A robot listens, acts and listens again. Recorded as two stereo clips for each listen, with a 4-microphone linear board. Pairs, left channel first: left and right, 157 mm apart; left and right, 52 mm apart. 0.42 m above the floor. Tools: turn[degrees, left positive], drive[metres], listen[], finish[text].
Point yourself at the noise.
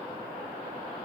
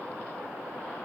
Action: listen[]
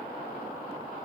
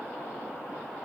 Action: listen[]
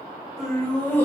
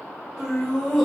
Action: turn[30]
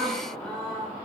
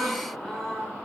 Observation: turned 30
Action: turn[30]
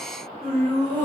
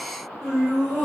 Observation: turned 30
Action: turn[30]
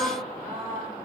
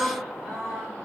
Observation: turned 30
Action: finish[Found it: laughter, straight ahead, 2 to 4 m away.]